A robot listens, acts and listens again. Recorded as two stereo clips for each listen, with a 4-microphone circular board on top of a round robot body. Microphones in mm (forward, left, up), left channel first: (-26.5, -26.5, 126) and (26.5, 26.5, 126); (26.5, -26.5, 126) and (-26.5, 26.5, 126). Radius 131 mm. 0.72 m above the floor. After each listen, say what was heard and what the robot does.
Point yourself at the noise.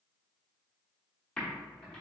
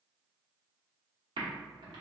The typing on a keyboard: 150° left. Turn 150° left.
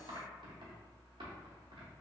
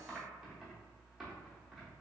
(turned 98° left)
The typing on a keyboard is now 50° left. Turn 50° left.
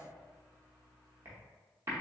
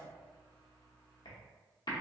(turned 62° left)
The typing on a keyboard is now 15° right. Turn 15° right.
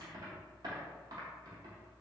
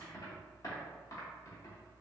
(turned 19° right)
Facing the typing on a keyboard.